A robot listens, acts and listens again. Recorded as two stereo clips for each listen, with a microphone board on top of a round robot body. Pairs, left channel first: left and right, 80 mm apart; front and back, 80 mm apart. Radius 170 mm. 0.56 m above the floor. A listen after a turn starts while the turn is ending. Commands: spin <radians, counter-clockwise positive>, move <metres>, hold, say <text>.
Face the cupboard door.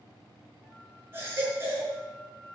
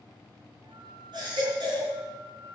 hold
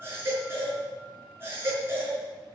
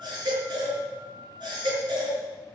hold
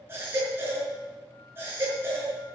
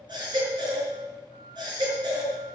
say I can't make out a cupboard door, only a flute and a baby crying.